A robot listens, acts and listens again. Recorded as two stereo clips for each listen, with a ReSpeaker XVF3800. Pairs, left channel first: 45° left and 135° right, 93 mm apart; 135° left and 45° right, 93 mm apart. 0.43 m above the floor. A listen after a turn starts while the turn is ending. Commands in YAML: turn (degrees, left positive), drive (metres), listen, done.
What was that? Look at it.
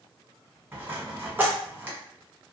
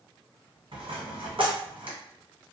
turn: -65
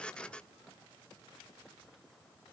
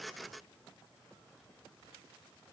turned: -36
turn: -30
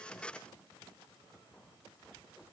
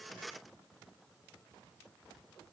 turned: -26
done: "Facing where the dropped coin came from. I can't hear it now."